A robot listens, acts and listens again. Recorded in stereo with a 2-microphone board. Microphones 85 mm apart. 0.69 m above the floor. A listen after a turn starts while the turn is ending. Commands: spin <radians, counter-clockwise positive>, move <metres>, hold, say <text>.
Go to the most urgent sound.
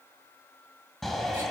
spin 0.52
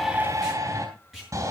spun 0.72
spin -0.70
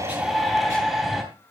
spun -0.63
move 1.0
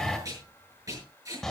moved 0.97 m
move 1.0
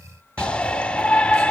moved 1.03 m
spin 0.26
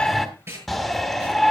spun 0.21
move 1.0
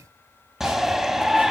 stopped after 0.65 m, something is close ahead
say Arrived at the shout, straight ahead.